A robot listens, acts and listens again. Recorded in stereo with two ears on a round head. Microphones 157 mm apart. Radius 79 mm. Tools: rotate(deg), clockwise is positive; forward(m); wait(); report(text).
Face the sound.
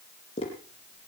rotate(-30)
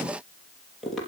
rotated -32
report("Found it: tapping, straight ahead, over 4 m away.")